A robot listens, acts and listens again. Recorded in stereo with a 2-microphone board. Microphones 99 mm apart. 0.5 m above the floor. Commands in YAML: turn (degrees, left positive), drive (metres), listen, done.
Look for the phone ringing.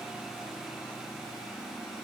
listen: true
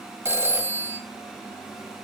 turn: -30
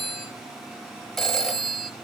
done: "Facing the phone ringing, 1 to 2 m away."